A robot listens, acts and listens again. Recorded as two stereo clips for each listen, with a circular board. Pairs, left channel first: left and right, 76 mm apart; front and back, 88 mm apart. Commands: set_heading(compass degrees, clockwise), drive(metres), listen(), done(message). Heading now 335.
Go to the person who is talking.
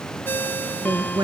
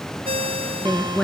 set_heading(50)
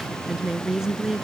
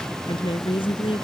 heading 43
drive(1.0)
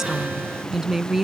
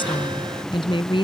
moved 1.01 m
drive(1.0)
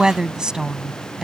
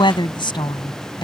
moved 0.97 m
set_heading(53)
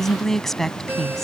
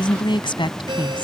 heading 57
drive(1.0)
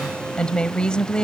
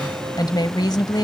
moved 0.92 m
set_heading(42)
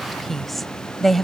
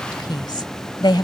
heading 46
drive(1.0)
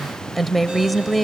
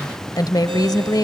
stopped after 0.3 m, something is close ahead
done("I am next to the woman speaking.")